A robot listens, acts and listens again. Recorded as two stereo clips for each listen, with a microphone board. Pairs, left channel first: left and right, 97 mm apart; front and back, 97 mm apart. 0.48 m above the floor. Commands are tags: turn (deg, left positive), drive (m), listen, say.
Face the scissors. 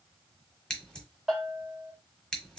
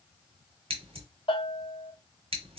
<turn deg="170"/>
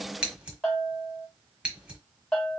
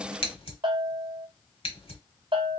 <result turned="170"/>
<turn deg="-10"/>
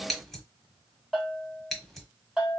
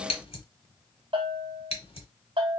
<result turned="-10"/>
<say>Found it: scissors, straight ahead.</say>